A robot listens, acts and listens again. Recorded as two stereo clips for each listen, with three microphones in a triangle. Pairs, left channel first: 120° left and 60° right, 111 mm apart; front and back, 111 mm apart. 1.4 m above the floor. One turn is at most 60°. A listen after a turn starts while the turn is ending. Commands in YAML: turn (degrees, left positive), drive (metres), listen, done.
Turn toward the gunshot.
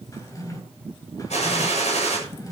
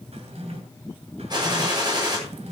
turn: 60
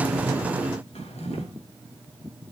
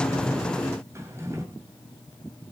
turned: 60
turn: 60
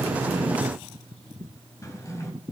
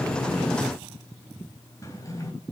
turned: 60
turn: 10
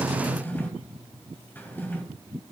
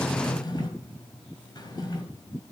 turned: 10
done: "I heard a gunshot from this way, but can't make it out now."